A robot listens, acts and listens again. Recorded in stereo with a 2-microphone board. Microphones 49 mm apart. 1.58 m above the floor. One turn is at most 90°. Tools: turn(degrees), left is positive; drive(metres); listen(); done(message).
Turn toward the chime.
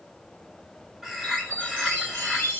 turn(degrees=35)
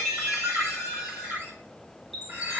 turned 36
done("Facing the chime, 2 to 4 m away.")